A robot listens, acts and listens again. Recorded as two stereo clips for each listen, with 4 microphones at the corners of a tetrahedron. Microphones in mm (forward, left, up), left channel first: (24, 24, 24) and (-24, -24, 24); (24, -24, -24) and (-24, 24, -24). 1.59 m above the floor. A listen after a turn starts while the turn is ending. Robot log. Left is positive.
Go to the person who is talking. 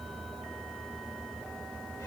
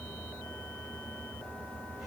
cmd idle
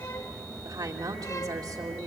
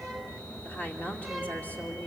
note: The woman speaking: 110° right.
cmd yaw -110
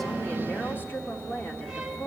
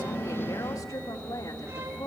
note: The woman speaking is now 10° right.
cmd yaw -10
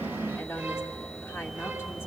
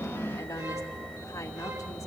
cmd fwd 1.0
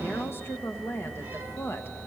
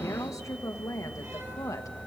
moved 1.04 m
note: The woman speaking is now 10° right.
cmd yaw -10
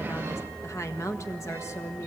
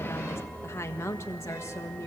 cmd fwd 1.0
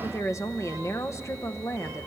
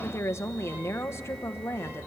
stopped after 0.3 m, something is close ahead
end: I am next to the woman speaking.